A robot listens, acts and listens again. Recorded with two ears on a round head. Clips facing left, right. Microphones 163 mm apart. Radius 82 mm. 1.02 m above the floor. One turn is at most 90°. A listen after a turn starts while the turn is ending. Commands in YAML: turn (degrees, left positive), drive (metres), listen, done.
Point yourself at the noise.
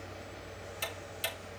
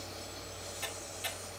turn: 60
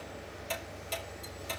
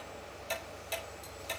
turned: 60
done: "Facing the ticking, over 4 m away."